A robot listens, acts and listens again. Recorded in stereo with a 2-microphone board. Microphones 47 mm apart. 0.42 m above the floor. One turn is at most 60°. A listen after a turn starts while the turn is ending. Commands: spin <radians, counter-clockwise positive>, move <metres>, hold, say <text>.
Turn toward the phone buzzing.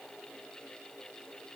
hold
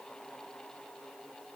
hold
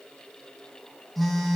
spin 0.52
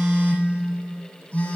spin 1.05
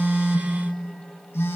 spin 1.05
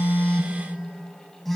say Facing the phone buzzing.